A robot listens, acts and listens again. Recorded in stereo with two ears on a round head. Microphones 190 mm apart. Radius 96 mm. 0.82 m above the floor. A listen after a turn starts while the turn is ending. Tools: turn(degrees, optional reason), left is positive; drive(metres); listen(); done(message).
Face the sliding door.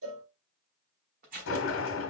turn(degrees=65, reason="The sliding door: about 65° left or 115° left.")
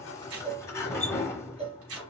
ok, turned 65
turn(degrees=15, reason="So it is at 15° left.")
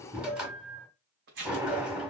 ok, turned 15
done("Found it: a sliding door, straight ahead, 1 to 2 m away.")